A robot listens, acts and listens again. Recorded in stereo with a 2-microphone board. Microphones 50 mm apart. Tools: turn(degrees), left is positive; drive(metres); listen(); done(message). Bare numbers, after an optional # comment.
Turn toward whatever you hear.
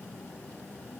listen()
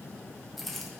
turn(30)
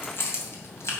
# So it is at 120° left.
turn(120)
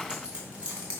# The keys jangling is now 25° right.
turn(-25)
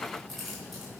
done("Found it: keys jangling, straight ahead, 2 to 4 m away.")